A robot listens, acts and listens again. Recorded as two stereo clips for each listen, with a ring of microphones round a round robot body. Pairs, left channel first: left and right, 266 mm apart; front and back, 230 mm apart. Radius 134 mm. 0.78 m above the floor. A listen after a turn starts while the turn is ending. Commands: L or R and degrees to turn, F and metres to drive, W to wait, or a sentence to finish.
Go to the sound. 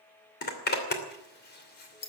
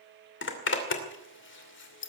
L35
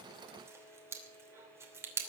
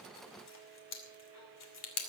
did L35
R10
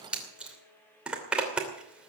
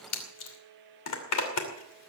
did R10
F1.0
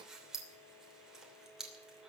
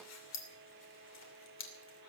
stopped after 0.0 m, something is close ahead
Blocked. The zipper is further on, straight ahead.